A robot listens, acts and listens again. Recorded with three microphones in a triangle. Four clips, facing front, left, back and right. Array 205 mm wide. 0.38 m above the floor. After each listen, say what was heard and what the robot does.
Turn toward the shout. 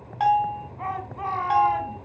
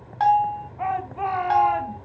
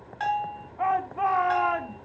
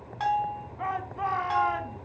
The shout: 145° left. Turn 145° left.
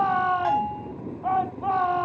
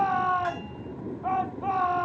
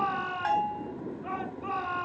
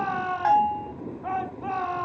Facing the shout, 2 to 4 m away.